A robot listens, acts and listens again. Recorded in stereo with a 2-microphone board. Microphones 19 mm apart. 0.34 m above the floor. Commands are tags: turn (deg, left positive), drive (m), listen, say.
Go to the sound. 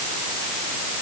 <listen/>
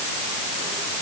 <listen/>
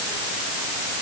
<say>I can't make out anything to turn to.</say>